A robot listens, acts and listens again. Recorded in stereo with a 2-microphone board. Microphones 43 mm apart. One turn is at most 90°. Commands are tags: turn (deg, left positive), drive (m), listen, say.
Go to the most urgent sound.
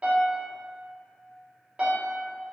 <listen/>
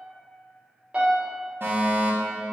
<turn deg="-55"/>
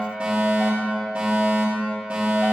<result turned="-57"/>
<turn deg="-30"/>
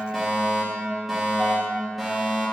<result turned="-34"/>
<drive m="1.0"/>
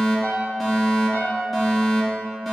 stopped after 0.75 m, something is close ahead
<turn deg="10"/>
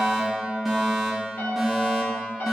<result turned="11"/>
<say>I am next to the fire alarm.</say>